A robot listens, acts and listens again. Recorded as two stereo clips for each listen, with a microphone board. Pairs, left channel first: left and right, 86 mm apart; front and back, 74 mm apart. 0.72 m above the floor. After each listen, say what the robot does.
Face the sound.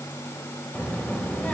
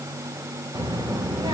Turn 165° left.
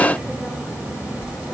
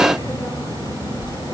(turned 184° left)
Turn 15° right.
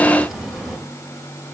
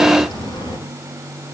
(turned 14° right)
Facing the child speaking, 1 to 2 m away.